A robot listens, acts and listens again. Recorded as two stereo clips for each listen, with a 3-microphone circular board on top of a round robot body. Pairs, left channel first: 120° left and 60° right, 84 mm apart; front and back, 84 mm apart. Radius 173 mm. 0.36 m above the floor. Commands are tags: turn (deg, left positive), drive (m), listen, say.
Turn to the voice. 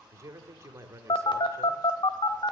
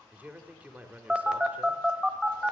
<turn deg="-110"/>
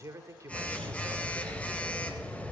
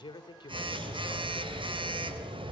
<turn deg="-10"/>
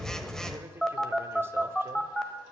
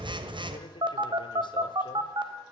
<listen/>
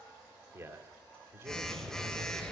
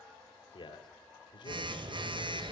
<say>Found it: a man speaking, straight ahead, 1 to 2 m away.</say>